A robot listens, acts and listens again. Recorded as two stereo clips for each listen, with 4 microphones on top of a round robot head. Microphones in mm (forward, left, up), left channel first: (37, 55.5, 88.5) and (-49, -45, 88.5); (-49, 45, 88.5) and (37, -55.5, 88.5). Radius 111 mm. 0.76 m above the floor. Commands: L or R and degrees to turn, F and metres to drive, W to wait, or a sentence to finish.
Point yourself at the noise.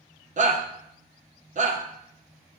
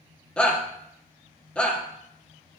R150
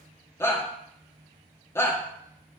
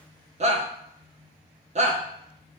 R20
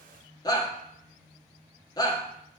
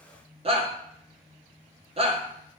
R10
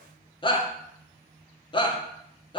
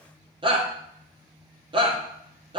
Found it: a shout, straight ahead.